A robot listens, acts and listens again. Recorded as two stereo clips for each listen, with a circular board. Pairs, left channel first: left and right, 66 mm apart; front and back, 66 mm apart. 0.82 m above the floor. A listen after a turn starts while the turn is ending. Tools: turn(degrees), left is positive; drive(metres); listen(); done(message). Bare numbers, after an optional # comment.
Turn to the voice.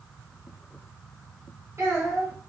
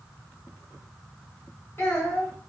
# The child speaking: 50° right.
turn(-50)
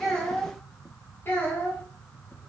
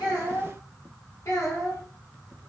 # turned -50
# The child speaking is now 35° left.
turn(35)
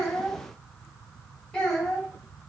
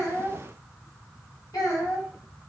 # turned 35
# The child speaking is now 15° left.
turn(15)
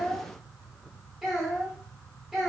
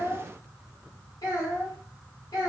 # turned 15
done("Found it: a child speaking, straight ahead, 1 to 2 m away.")